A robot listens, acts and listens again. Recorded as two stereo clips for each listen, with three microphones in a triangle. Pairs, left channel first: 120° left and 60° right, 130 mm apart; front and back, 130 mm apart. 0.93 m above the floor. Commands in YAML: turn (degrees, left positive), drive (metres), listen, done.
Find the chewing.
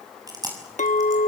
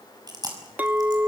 turn: -120
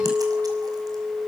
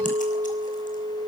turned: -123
listen: true
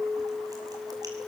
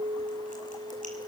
listen: true
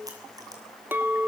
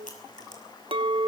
done: "I heard chewing from this way, but can't make it out now."